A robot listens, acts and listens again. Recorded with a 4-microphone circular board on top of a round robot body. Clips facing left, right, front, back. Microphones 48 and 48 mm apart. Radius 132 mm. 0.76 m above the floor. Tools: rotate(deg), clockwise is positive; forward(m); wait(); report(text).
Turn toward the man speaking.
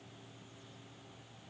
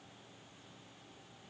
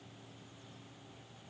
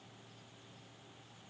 wait()
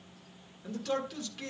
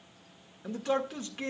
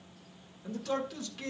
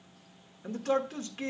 rotate(135)
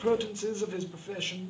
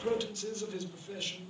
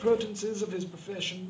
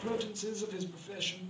rotate(-55)
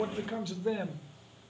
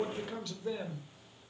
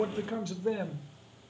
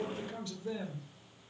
rotate(-15)
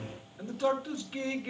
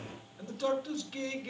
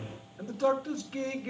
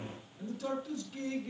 rotate(-10)
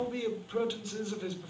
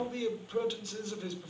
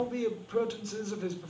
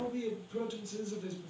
report("Found it: a man speaking, straight ahead.")